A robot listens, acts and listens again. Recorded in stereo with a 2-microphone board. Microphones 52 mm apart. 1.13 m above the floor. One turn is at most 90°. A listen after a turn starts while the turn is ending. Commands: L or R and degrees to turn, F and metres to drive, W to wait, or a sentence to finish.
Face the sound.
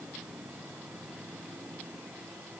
W
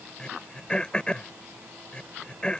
L20
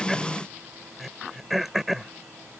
Facing the throat clearing.